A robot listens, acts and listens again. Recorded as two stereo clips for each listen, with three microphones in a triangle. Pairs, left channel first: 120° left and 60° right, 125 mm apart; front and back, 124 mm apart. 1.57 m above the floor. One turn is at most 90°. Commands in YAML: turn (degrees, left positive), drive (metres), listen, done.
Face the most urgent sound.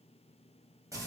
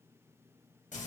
listen: true
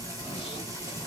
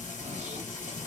listen: true
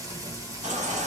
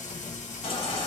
turn: -45
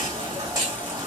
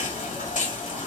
done: "Facing the baby crying."